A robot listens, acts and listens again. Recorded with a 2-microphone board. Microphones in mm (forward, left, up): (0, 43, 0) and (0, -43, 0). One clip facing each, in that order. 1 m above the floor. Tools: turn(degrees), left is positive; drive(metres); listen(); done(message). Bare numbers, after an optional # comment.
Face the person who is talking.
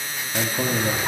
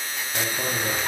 # The man speaking: about 20° left or 160° left.
turn(20)
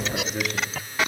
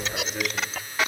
done("Facing the man speaking, 1 to 2 m away.")